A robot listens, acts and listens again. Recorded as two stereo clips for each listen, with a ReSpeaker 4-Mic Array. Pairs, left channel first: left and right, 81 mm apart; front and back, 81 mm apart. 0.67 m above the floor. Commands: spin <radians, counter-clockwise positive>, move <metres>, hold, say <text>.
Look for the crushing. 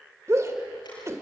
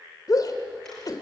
hold
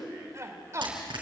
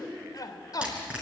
spin -1.83
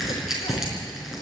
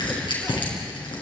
say Facing the crushing.